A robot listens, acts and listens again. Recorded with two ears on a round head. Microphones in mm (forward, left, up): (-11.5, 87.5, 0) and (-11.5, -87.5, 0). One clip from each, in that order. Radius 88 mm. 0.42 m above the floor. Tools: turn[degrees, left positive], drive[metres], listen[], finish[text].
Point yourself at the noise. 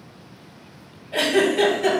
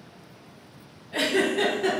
Thought: The giggle: about 25° left or 155° left.
Action: turn[25]
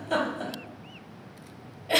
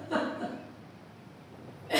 Thought: So it is at 130° left.
Action: turn[130]
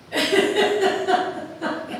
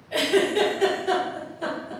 Thought: The giggle is now 25° right.
Action: turn[-25]
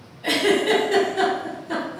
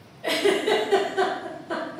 Action: finish[Facing the giggle, 1 to 2 m away.]